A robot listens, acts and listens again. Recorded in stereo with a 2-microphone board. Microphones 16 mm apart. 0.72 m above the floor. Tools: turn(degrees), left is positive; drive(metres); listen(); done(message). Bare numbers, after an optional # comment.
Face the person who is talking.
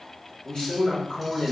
# The man speaking: about 45° left or 135° left.
turn(45)
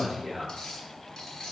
# So it is at 10° left.
turn(10)
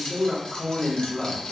done("Facing the man speaking, 1 to 2 m away.")